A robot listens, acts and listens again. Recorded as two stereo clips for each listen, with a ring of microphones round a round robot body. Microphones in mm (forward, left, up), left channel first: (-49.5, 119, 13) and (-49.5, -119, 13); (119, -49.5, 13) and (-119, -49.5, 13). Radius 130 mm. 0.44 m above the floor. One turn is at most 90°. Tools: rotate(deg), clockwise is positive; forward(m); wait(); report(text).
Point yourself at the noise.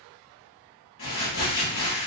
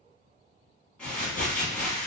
rotate(-85)
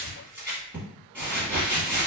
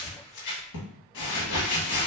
report("Found it: crumpling, straight ahead.")